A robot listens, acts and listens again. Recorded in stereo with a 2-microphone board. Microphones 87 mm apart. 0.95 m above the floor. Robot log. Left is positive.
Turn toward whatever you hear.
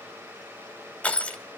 note: The crushing: about 15° left or 165° left.
cmd yaw +15
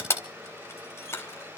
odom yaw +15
note: So it is at 150° left.
cmd yaw +150
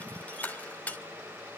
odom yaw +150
note: The crushing is now 15° left.
cmd yaw +15
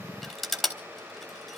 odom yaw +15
end: Found it: crushing, straight ahead, 2 to 4 m away.